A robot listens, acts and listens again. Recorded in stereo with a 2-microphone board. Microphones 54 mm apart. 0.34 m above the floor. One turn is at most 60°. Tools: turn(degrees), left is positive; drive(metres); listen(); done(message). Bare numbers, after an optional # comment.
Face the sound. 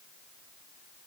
listen()
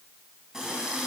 turn(-30)
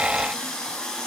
# So it is at 15° left.
turn(15)
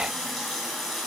done("Found it: a running tap, straight ahead.")